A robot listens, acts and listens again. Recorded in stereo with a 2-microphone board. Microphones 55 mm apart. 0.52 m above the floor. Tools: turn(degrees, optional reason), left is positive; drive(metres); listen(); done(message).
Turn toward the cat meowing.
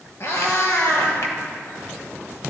turn(degrees=70, reason="The cat meowing: about 70° left or 110° left.")
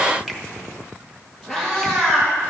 done("Facing the cat meowing, 2 to 4 m away.")